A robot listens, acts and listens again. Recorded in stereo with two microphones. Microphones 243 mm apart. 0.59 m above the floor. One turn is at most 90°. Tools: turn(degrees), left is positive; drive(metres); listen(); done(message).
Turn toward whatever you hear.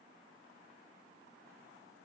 listen()
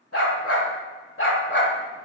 turn(degrees=45)
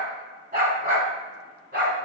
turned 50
turn(degrees=-50)
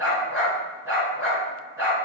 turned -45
turn(degrees=-10)
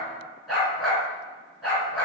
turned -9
done("Facing the dog barking.")